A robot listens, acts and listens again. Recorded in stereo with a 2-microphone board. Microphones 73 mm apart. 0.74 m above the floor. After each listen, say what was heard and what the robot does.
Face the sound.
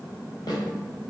The snare drum: about 70° left or 110° left. Turn 70° left.
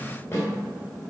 So it is at 30° left. Turn 30° left.
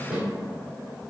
The snare drum is now 15° right. Turn 15° right.
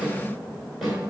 Found it: a snare drum, straight ahead, 2 to 4 m away.